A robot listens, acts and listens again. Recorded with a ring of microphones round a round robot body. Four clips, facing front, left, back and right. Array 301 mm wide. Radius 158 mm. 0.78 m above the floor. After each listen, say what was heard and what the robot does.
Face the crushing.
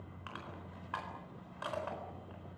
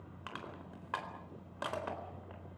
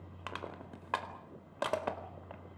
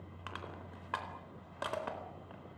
The crushing: straight behind. Turn 180° left.
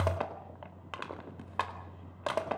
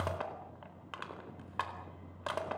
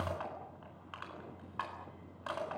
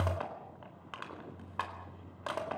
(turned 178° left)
Found it: crushing, straight ahead.